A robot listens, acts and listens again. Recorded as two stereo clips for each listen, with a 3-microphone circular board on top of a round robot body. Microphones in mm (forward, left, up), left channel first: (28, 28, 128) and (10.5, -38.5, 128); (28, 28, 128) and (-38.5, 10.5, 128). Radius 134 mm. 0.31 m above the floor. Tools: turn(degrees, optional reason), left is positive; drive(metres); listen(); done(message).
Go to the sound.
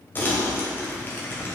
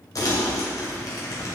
turn(degrees=20, reason="The crumpling: 20° left.")
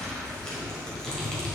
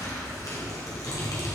drive(metres=1.0)
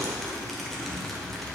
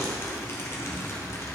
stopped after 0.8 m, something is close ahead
turn(degrees=-10, reason="The crumpling is now 10° right.")
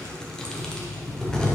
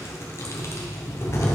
done("Arrived at the crumpling, straight ahead.")